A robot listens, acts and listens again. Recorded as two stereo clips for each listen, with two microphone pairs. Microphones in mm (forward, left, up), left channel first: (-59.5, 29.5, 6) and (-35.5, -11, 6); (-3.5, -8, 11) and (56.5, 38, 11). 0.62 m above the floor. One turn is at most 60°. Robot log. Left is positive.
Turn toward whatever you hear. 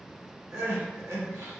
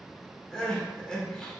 note: The crying: 60° right.
cmd yaw -60
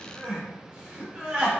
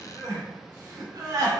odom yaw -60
end: Found it: crying, straight ahead.